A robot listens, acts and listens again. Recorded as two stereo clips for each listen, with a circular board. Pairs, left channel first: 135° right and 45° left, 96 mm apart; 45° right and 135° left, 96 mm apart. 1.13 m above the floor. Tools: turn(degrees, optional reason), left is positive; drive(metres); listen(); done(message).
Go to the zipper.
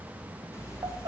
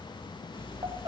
turn(degrees=-75, reason="The zipper: 75° right.")
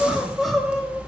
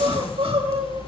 turn(degrees=-35, reason="The zipper is now 35° right.")
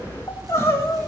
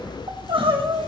drive(metres=1.0)
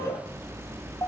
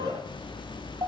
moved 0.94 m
turn(degrees=-15, reason="The zipper is now 15° right.")
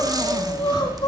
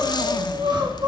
drive(metres=1.0)
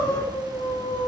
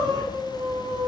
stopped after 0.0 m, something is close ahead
listen()
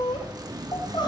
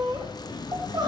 done("I am next to the zipper.")